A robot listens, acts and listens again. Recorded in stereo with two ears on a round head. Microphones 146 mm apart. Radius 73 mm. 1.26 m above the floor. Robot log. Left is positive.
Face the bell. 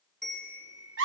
cmd yaw +30
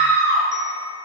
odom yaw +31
cmd idle
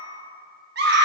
cmd idle
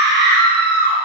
end: I heard a bell, but can't make it out now. It was about 30° right or 145° left.